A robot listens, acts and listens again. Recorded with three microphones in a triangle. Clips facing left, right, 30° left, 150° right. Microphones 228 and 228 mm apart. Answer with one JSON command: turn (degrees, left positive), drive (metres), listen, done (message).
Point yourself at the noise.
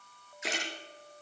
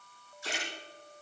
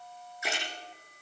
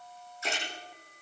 {"turn": 105}
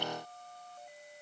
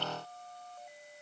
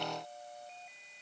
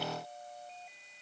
{"done": "Facing where the splash came from. I can't hear it now."}